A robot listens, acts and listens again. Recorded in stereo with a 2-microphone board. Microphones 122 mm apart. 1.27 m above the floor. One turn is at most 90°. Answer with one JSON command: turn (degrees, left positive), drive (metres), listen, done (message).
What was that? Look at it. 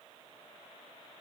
{"listen": true}
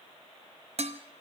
{"turn": -60}
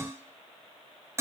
{"turn": -25}
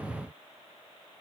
{"listen": true}
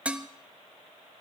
{"turn": -10}
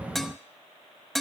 {"done": "Facing the dishes clattering."}